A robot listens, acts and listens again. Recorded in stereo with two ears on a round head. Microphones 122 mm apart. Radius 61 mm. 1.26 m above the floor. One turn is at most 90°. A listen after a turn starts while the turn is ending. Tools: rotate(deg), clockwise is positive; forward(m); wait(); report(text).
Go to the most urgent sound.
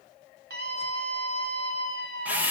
rotate(90)
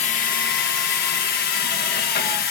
wait()
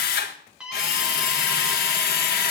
forward(1.0)
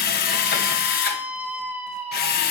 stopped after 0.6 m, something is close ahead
rotate(15)
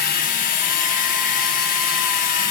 wait()
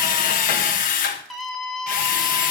report("Blocked. The scream is further on, straight ahead.")